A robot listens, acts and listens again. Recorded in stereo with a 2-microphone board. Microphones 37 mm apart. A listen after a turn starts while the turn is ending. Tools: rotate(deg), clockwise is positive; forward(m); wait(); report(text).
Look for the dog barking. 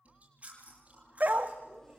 rotate(55)
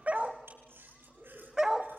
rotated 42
rotate(15)
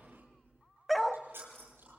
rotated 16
report("Facing the dog barking, 1 to 2 m away.")